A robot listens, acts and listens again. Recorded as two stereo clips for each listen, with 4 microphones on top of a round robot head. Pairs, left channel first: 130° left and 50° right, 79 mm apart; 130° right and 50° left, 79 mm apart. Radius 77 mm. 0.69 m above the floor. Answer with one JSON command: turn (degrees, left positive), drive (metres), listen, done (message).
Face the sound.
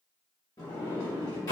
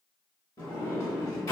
{"turn": 180}
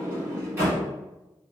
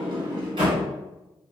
{"turn": 20}
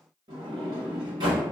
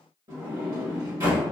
{"turn": -10}
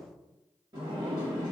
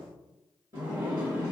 {"done": "Found it: a sliding door, straight ahead."}